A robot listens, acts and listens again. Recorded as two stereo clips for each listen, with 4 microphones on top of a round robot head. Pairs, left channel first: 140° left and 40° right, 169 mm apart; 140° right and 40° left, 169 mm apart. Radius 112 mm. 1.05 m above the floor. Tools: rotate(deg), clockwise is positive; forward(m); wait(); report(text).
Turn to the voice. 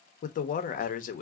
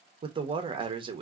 rotate(-100)
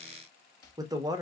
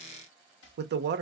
rotate(-25)
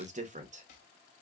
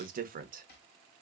report("Facing the man speaking.")